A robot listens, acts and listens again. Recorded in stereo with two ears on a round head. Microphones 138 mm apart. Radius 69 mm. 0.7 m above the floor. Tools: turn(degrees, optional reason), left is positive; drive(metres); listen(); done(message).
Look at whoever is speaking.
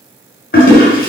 listen()
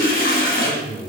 turn(degrees=25, reason="The man speaking: about 25° left or 155° left.")
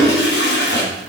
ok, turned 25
listen()
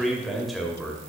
done("Found it: a man speaking, straight ahead.")